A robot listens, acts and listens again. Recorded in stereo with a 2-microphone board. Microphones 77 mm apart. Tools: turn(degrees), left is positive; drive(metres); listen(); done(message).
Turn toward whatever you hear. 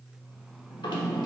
turn(degrees=90)
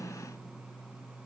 listen()
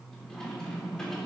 turn(degrees=10)
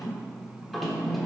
done("Facing the drawer.")